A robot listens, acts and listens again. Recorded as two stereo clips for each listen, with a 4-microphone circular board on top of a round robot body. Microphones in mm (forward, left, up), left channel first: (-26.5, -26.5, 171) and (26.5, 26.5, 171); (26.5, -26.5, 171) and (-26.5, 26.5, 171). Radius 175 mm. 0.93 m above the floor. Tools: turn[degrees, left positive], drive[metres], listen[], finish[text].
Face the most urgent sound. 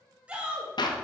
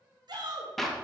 Thought: The shout: 120° left.
Action: turn[120]
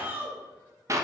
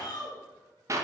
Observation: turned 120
Thought: The shout is now 20° right.
Action: turn[-20]
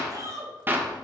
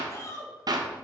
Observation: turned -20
Action: finish[Found it: a shout, straight ahead, 2 to 4 m away.]